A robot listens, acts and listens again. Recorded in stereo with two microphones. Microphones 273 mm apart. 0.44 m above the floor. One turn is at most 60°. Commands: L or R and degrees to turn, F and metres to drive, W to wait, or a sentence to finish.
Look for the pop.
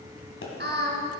L50
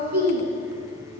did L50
W
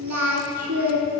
I heard a pop, but can't make it out now. It was about straight ahead or 80° left.